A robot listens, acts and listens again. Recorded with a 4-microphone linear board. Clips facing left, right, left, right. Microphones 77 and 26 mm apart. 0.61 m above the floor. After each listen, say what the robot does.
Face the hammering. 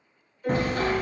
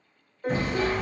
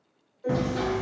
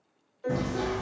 Turn 60° left.
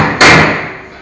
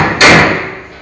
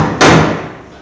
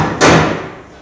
Turn 45° left.
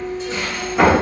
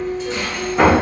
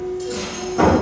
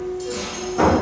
Found it: hammering, straight ahead, under 1 m away.